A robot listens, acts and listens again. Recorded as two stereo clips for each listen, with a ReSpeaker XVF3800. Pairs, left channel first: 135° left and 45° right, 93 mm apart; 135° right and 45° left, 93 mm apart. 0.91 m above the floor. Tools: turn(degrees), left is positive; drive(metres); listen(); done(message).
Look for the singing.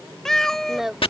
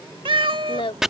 turn(degrees=-130)
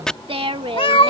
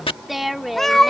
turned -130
turn(degrees=-45)
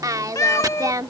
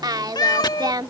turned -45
done("Found it: singing, straight ahead.")